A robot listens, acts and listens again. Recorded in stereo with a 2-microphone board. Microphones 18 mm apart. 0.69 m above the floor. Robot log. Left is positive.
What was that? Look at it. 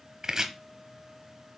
note: The chopping: about 35° right or 145° right.
cmd yaw -35
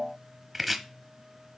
end: Facing the chopping, under 1 m away.